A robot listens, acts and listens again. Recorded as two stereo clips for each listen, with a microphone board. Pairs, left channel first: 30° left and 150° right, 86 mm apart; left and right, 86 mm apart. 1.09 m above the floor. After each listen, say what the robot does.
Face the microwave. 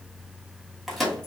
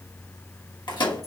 Turn 120° left.
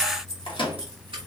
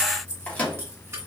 Turn 15° left.
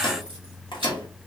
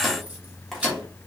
Facing the microwave, 1 to 2 m away.